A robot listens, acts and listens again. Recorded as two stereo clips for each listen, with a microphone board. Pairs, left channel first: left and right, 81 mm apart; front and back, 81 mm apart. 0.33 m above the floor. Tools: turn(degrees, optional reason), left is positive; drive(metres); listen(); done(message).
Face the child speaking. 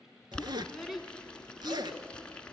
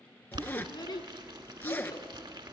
done("Found it: a child speaking, straight ahead.")